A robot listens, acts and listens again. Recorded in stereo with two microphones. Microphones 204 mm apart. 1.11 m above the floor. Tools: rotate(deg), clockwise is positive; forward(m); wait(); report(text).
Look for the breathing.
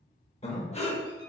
rotate(-30)
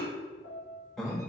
report("Facing the breathing.")